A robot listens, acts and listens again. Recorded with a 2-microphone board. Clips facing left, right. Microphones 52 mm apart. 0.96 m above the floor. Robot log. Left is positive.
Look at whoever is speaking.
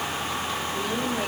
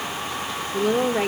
note: The woman speaking: about 60° right or 120° right.
cmd yaw -60
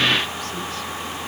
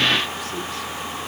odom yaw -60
cmd idle
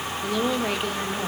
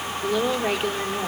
note: So it is at 10° right.
cmd yaw -10
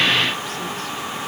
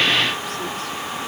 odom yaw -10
cmd idle
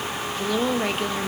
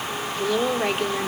end: Found it: a woman speaking, straight ahead.